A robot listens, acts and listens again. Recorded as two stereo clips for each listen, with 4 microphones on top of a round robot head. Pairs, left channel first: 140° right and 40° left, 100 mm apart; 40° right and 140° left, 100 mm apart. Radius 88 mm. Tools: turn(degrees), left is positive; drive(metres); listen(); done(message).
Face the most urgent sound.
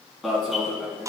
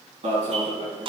turn(degrees=135)
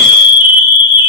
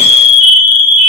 turn(degrees=-20)
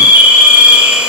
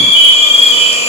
done("Found it: an alarm, straight ahead, over 4 m away.")